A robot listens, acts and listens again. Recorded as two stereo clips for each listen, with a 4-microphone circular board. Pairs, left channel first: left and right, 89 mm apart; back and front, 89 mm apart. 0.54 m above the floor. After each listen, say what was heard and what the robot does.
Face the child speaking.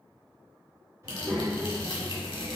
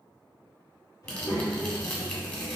The child speaking: 125° right. Turn 125° right.
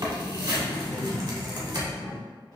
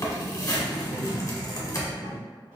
The child speaking is now 45° left. Turn 45° left.
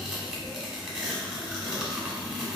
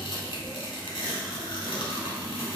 The child speaking is now 10° left. Turn 10° left.
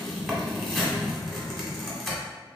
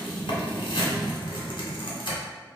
Facing the child speaking.